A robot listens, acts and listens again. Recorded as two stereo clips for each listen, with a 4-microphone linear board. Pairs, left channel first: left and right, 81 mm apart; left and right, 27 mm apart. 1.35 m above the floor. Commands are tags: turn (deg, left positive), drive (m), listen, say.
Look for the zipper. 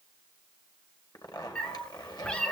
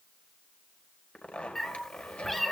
<turn deg="60"/>
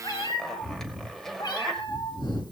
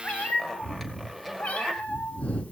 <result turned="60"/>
<say>Facing the zipper.</say>